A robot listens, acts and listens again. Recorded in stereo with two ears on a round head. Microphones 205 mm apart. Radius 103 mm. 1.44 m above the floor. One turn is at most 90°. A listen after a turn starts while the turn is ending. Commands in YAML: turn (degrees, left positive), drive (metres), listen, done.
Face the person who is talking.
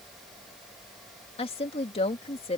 turn: 25
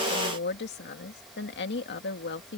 turn: 90
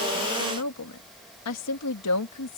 turn: 85
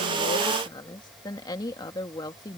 turn: 15
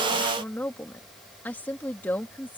turn: 10
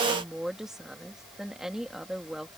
done: "Facing the woman speaking."